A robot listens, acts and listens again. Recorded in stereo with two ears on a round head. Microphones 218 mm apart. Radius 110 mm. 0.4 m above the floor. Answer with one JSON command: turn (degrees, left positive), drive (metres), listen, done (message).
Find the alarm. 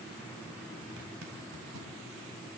{"listen": true}
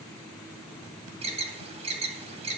{"turn": -25}
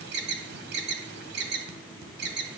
{"turn": -125}
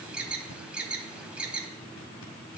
{"done": "Found it: an alarm, straight ahead, 2 to 4 m away."}